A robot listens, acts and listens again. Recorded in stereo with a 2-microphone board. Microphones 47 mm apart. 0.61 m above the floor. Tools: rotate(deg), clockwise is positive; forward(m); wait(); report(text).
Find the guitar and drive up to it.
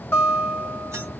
rotate(-45)
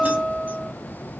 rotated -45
forward(1.0)
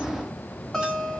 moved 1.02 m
forward(1.0)
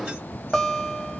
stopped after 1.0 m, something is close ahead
report("I am next to the guitar.")